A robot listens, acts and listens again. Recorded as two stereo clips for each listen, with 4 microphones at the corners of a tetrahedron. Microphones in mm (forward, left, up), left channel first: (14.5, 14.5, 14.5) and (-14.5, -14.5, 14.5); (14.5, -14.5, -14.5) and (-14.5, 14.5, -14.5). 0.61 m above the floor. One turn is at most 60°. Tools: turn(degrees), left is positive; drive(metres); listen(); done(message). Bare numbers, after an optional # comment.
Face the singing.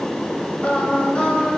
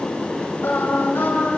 # The singing: 20° right.
turn(-20)
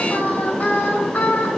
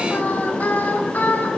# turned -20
done("Found it: singing, straight ahead.")